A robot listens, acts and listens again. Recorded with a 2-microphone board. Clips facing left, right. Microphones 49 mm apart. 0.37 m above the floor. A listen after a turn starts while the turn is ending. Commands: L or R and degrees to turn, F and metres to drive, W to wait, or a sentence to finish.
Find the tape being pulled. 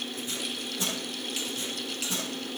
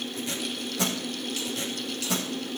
R90
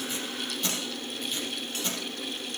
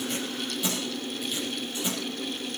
R10
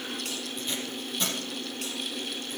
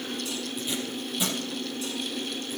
Found it: tape being pulled, straight ahead.